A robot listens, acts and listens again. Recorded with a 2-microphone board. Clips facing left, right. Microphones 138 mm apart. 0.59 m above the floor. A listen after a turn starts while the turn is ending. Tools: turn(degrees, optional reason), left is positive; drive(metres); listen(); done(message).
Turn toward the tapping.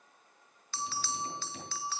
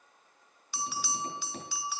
turn(degrees=-50, reason="The tapping: about 50° right or 130° right.")
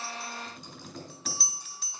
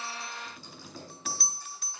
done("Found it: tapping, straight ahead, over 4 m away.")